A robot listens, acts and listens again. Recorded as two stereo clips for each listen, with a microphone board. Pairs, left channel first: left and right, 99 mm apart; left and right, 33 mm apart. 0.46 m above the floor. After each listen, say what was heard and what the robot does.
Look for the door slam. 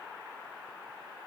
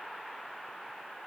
Keep listening.
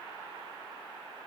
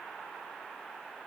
Keep listening.
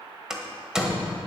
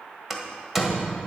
Turn 30° right.
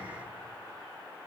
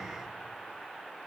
Keep listening.
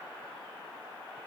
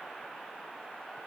I heard a door slam, but can't make it out now. It was about 25° left or 145° right.